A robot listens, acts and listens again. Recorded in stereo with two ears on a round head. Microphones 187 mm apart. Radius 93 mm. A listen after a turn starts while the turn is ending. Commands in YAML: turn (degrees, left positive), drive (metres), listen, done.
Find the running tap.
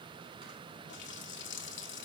turn: 60
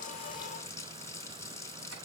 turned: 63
turn: 15
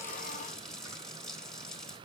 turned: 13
done: "Facing the running tap, 1 to 2 m away."